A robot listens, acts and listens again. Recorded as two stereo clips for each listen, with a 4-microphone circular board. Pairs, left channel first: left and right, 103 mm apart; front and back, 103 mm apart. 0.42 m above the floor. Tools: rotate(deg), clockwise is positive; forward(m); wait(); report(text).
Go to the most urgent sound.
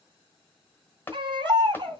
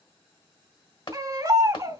rotate(125)
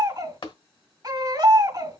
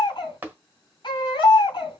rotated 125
rotate(40)
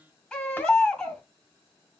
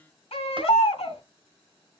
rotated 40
rotate(-10)
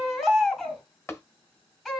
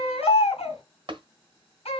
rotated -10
forward(1.0)
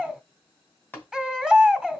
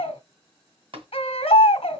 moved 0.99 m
forward(1.0)
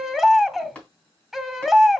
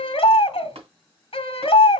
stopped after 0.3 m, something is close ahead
report("Arrived at the baby crying, straight ahead.")